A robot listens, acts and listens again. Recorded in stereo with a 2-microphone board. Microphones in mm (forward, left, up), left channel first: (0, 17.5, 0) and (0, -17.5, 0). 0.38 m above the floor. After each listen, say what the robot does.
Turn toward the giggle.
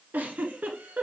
Turn 60° right.
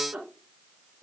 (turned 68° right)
Turn 50° right.
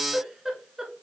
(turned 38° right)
Turn 15° right.
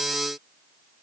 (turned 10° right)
Keep listening.
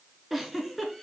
Found it: a giggle, straight ahead, 1 to 2 m away.